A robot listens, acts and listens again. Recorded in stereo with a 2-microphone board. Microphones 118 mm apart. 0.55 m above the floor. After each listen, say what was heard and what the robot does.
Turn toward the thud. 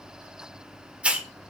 Keep listening.
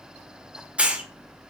Keep listening.
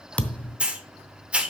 Turn 30° left.
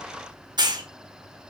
Keep listening.
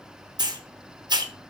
I heard a thud, but can't make it out now. It was about 20° right or 140° left.